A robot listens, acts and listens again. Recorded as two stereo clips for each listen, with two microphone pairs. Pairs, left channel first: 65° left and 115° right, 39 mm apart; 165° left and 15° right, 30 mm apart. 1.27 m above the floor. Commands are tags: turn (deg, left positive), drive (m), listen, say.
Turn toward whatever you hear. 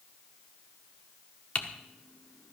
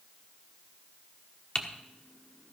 <turn deg="110"/>
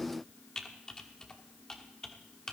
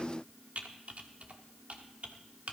<say>Facing the typing on a keyboard, 1 to 2 m away.</say>